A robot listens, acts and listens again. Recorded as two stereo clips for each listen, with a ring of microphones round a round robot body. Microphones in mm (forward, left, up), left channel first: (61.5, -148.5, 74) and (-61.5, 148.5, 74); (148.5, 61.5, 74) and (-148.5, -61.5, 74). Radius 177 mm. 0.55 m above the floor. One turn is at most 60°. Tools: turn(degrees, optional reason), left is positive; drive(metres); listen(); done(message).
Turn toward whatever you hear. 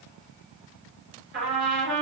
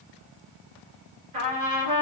turn(degrees=60, reason="The trumpet: 170° left.")
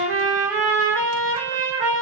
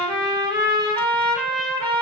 turn(degrees=60, reason="The trumpet is now 125° left.")
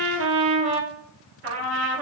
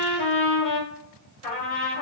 turn(degrees=55, reason="The trumpet is now 55° left.")
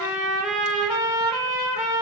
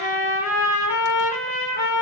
turn(degrees=-10, reason="The trumpet is now 10° right.")
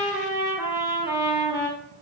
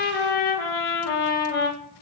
done("Found it: a trumpet, straight ahead.")